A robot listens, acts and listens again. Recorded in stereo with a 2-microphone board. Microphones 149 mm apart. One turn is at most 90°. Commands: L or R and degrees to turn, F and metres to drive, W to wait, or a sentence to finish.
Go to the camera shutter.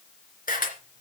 L90
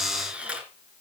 R10
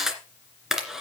F1.0
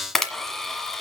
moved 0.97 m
F1.0
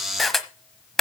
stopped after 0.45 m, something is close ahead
I am next to the camera shutter.